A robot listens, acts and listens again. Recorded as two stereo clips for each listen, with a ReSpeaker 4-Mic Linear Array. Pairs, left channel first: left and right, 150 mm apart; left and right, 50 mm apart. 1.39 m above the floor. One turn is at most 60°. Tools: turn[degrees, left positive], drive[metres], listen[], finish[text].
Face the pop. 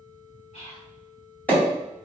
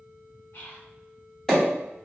Action: turn[30]
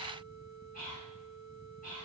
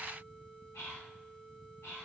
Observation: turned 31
Action: listen[]
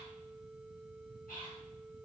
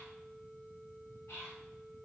Action: finish[I heard a pop, but can't make it out now. It was about 20° right or 140° left.]